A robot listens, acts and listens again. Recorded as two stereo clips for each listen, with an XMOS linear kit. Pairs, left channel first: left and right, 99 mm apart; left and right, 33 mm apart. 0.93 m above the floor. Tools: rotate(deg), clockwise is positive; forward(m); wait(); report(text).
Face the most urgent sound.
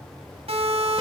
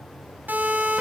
rotate(90)
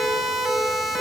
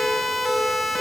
report("Facing the siren.")